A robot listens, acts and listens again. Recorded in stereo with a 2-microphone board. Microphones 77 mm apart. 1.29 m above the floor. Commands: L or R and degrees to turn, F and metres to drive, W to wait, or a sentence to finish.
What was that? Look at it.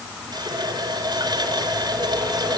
R75
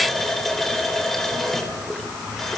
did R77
Facing the running tap, 2 to 4 m away.